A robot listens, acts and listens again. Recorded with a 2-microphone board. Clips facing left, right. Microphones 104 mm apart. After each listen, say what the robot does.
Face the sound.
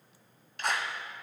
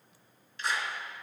Turn 65° left.
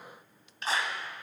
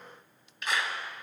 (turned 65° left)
Turn 35° left.
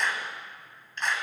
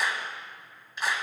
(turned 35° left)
Facing the clap, 1 to 2 m away.